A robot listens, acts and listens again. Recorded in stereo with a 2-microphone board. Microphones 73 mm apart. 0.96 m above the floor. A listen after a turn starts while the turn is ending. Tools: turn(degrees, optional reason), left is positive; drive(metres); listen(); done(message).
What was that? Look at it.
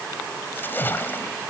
turn(degrees=30, reason="The splash: about 30° left or 150° left.")
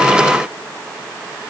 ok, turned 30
listen()
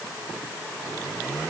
done("I heard a splash, but can't make it out now. It was about straight ahead or 120° left.")